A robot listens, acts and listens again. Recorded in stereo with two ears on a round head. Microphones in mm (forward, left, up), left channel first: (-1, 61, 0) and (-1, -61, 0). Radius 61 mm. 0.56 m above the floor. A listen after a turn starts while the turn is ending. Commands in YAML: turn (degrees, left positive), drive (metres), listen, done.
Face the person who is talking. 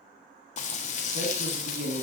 turn: -60
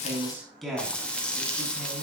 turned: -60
done: "Facing the man speaking, over 4 m away."